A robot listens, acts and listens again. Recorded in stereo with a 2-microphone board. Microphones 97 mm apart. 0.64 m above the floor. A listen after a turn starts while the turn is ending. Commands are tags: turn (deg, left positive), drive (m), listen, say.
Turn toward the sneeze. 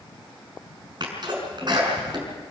<turn deg="-50"/>
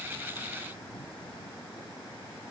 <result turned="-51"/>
<listen/>
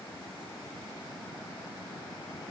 <say>I heard a sneeze, but can't make it out now. It was about 5° left or 80° right.</say>